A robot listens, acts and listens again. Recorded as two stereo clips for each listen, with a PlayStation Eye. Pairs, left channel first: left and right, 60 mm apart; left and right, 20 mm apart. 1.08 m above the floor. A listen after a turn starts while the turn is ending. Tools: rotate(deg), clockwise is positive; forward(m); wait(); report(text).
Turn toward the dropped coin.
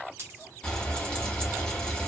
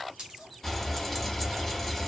rotate(40)
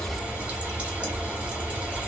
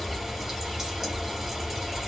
wait()
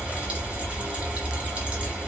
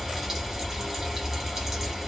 report("I heard a dropped coin, but can't make it out now. It was about straight ahead or 100° right.")